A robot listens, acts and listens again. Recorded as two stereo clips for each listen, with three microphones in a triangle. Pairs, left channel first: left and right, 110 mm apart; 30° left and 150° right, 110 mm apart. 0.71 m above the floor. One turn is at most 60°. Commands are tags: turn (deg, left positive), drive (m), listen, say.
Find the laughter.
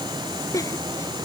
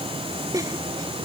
<turn deg="60"/>
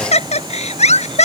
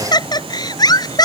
<turn deg="60"/>
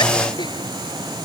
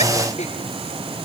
<turn deg="25"/>
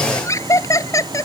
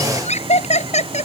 <turn deg="30"/>
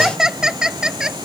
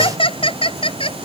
<say>Facing the laughter.</say>